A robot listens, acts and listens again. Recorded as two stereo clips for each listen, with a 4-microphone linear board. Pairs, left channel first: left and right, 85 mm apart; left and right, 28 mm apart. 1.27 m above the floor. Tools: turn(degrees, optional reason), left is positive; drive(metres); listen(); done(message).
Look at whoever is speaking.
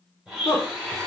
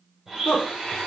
turn(degrees=35, reason="The woman speaking: about 35° left or 145° left.")
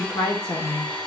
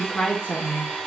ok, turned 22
turn(degrees=125, reason="So it is at 125° left.")
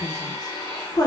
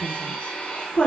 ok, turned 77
turn(degrees=50, reason="The woman speaking is now 50° left.")
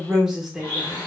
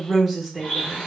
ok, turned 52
done("Found it: a woman speaking, straight ahead.")